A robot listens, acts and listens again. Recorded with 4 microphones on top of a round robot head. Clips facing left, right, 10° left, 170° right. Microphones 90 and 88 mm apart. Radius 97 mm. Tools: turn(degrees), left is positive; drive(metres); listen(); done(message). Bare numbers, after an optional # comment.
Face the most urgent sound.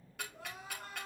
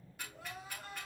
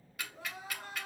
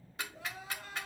# The crying: 50° left.
turn(50)
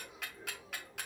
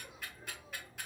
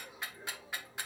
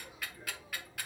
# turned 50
listen()
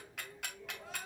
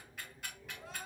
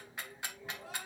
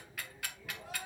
listen()
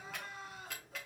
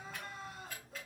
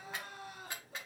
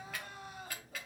done("Found it: crying, straight ahead, 2 to 4 m away.")